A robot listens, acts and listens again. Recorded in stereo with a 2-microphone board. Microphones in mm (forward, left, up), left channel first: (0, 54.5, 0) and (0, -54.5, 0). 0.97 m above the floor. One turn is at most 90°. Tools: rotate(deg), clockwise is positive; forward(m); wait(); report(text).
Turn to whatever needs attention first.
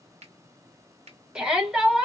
rotate(30)
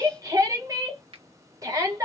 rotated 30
rotate(90)
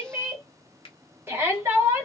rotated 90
rotate(25)
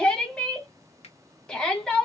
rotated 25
rotate(-10)
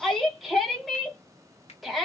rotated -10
report("Found it: a shout, straight ahead, 1 to 2 m away.")